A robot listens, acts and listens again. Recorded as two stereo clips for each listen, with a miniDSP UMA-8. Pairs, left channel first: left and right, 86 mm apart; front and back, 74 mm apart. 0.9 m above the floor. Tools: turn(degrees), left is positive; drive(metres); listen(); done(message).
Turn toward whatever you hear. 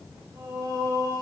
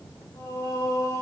turn(degrees=-45)
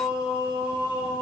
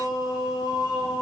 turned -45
turn(degrees=-15)
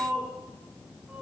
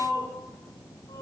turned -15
turn(degrees=-10)
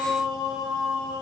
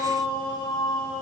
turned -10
turn(degrees=-10)
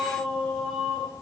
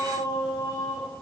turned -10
done("Found it: singing, straight ahead, 2 to 4 m away.")